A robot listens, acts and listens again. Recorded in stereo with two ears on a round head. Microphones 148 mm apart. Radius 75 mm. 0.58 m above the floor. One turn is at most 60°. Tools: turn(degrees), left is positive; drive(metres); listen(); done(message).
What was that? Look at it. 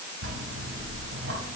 turn(degrees=-60)
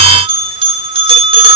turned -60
turn(degrees=-35)
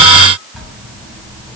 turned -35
done("Facing the bell.")